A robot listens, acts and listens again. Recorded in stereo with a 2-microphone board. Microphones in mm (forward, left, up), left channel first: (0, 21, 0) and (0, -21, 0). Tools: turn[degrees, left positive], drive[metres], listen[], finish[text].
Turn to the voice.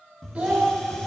Thought: The child speaking: about 25° right or 155° right.
Action: turn[-25]
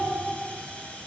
Action: listen[]
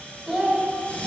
Action: finish[Facing the child speaking, 1 to 2 m away.]